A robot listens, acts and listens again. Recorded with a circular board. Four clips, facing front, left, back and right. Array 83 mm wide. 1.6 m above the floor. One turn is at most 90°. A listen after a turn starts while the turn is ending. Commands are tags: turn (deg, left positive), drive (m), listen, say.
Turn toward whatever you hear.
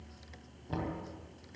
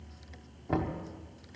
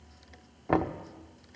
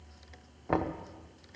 <turn deg="-90"/>
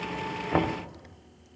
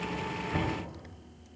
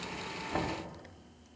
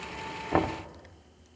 <turn deg="-50"/>
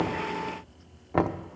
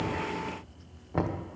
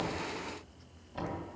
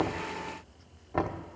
<say>Facing the knocking, under 1 m away.</say>